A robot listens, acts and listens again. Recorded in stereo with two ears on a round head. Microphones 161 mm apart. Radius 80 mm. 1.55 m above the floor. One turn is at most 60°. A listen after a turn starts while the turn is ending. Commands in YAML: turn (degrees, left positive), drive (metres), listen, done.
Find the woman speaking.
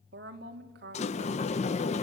turn: -60
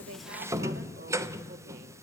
listen: true
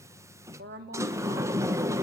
turn: -60
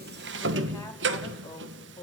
turn: 15
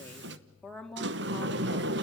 done: "Facing the woman speaking, 2 to 4 m away."